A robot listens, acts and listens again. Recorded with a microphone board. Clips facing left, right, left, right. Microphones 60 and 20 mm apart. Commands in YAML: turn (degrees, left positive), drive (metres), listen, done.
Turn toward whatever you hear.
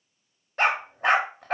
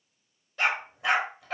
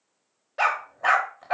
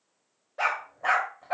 turn: 45
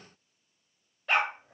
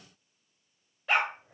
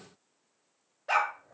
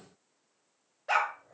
done: "Found it: a dog barking, straight ahead, under 1 m away."